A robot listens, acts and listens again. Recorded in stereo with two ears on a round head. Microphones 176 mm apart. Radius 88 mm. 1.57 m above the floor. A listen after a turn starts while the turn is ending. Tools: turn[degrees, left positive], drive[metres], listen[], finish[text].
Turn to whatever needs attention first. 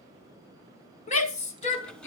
Thought: The shout: about 35° left or 145° left.
Action: turn[35]
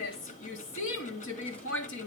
Thought: So it is at 105° left.
Action: turn[105]
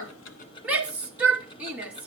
Action: finish[Facing the shout.]